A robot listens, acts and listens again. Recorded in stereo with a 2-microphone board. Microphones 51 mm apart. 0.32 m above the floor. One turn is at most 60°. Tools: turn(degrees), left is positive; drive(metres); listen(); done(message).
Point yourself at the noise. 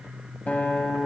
turn(degrees=30)
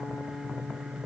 turn(degrees=60)
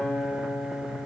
turn(degrees=35)
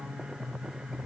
turn(degrees=-10)
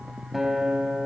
done("Found it: a guitar, straight ahead.")